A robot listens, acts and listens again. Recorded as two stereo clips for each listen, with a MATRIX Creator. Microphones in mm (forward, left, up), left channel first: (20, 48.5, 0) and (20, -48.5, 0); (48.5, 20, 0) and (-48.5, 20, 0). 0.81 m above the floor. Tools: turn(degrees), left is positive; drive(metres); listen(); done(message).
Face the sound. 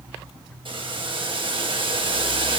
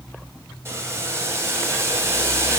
turn(degrees=-115)
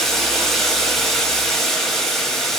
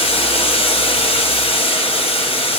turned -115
done("Facing the boiling.")